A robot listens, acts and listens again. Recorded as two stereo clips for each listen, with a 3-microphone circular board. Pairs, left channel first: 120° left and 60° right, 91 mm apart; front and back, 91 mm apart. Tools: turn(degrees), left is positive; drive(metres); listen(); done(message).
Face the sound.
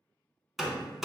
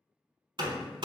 turn(degrees=-145)
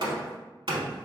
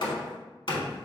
turn(degrees=-30)
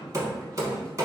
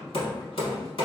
done("Facing the hammering.")